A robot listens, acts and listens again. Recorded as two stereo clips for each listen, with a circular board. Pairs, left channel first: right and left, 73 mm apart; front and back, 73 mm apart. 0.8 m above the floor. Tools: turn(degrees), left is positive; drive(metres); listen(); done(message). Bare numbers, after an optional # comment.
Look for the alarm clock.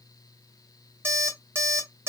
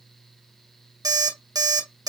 # The alarm clock: 150° left.
turn(150)
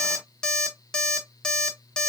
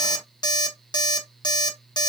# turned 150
# The alarm clock is now 10° right.
turn(-10)
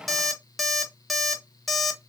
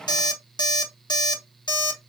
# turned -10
done("Facing the alarm clock, under 1 m away.")